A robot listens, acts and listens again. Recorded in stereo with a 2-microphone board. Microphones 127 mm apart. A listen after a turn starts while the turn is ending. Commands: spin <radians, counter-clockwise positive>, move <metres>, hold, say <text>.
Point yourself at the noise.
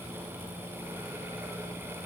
hold
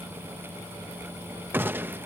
spin -0.26
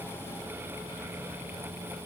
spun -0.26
hold
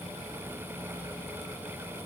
say I heard a gunshot, but can't make it out now. It was about straight ahead or 150° right.